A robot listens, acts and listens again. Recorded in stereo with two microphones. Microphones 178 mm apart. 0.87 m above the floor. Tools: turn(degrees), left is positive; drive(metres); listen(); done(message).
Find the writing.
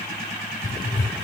turn(degrees=50)
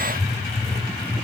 done("Facing the writing, 2 to 4 m away.")